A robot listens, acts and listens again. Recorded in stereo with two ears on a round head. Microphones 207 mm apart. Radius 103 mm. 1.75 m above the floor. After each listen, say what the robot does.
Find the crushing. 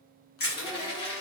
Turn 45° left.
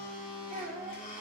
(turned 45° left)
Keep listening.
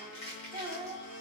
Turn 85° left.
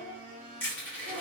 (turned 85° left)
Turn 10° left.
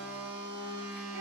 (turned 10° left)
Keep listening.
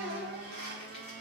Keep listening.
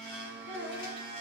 Facing where the crushing came from. I can't hear it now.